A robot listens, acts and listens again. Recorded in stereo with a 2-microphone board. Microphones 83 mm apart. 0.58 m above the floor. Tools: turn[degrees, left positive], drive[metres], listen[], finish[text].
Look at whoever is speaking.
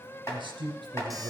Thought: The man speaking: about 65° right or 115° right.
Action: turn[-65]
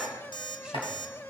Action: listen[]
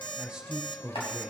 Action: finish[Found it: a man speaking, straight ahead, 2 to 4 m away.]